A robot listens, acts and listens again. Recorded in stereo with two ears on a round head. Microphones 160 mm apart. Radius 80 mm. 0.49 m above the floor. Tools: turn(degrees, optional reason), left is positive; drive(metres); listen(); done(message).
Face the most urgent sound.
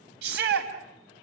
turn(degrees=-65, reason="The shout: about 65° right or 115° right.")
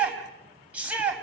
turn(degrees=-10, reason="So it is at 10° right.")
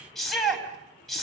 done("Facing the shout.")